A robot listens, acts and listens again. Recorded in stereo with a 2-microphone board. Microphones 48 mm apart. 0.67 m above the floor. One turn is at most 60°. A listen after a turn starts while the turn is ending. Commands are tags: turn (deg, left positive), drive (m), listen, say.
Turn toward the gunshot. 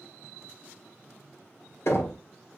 <listen/>
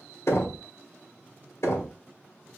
<listen/>
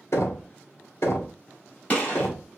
<turn deg="25"/>
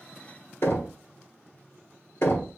<listen/>
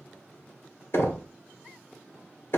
<say>I heard a gunshot, but can't make it out now. It was about straight ahead or 130° left.</say>